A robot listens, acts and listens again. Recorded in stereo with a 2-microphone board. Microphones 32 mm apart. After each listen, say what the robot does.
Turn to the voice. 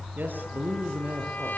Turn 90° right.
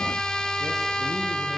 Keep listening.
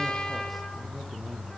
Keep listening.
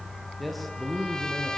Facing the man speaking.